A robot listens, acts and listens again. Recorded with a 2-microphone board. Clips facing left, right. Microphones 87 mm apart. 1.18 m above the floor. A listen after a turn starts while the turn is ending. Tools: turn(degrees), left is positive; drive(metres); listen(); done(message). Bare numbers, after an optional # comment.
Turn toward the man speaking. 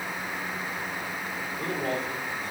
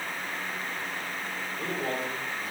turn(-30)
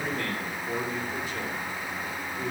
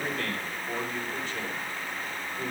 turn(30)
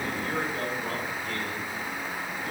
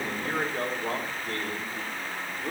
# So it is at 50° right.
turn(-50)
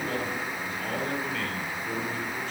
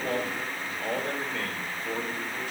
# The man speaking is now 10° right.
turn(-10)
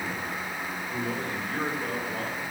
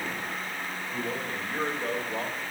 done("Found it: a man speaking, straight ahead.")